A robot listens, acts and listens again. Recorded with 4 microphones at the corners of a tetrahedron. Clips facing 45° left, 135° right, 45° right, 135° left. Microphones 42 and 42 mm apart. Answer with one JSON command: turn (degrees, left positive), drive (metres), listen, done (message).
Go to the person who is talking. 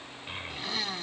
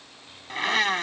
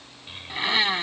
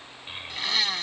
{"turn": 65}
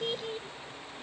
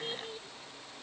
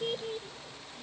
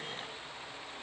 {"turn": -10}
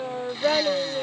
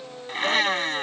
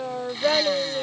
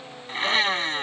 {"drive": 1.0}
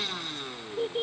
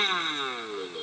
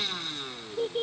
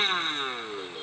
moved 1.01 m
{"drive": 1.0}
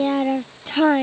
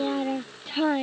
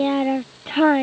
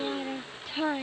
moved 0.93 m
{"drive": 1.0}
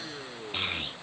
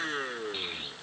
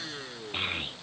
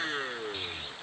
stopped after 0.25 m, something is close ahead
{"done": "Arrived at the child speaking, straight ahead."}